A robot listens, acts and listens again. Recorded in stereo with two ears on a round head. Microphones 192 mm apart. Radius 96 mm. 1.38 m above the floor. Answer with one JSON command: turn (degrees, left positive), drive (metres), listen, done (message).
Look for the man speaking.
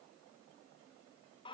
{"listen": true}
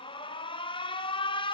{"listen": true}
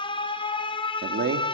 {"turn": -45}
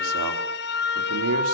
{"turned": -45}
{"turn": -85}
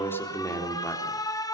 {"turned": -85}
{"turn": 10}
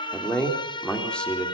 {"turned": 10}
{"done": "Found it: a man speaking, straight ahead, over 4 m away."}